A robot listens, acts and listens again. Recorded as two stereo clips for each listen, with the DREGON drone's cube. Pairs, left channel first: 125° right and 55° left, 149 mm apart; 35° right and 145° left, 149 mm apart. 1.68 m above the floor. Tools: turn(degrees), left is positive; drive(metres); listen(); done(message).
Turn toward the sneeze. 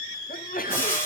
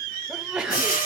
turn(degrees=-130)
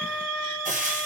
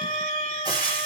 done("I heard a sneeze from this way, but can't make it out now.")